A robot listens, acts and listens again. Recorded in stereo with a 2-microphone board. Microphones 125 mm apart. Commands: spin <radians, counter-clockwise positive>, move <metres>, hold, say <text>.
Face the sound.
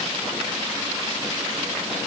hold
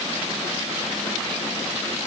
hold
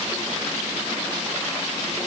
say I can't make out anything.